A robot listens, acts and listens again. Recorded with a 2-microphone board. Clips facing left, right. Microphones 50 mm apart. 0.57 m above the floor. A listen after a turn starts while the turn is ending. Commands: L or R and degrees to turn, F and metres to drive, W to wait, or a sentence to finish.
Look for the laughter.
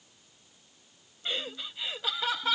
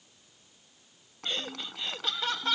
L30
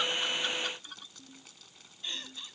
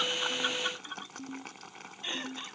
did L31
R30
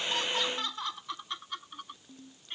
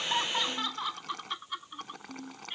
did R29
R10
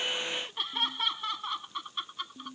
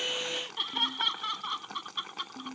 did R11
Facing the laughter.